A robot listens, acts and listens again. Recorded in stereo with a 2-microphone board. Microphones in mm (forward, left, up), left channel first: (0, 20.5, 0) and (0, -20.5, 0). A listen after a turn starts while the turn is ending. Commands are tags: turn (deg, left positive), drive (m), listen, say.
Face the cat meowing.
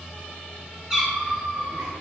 <turn deg="-20"/>
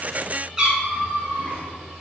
<turn deg="-35"/>
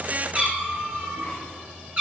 <turn deg="-35"/>
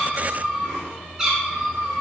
<turn deg="-15"/>
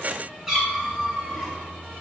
<say>Facing the cat meowing.</say>